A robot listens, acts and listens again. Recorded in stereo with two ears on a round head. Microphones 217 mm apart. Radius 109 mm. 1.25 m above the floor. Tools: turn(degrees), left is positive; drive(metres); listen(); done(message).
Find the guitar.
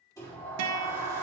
turn(degrees=-75)
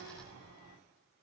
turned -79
listen()
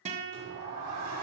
turn(degrees=-25)
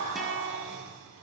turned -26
listen()
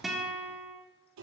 done("Facing the guitar, 1 to 2 m away.")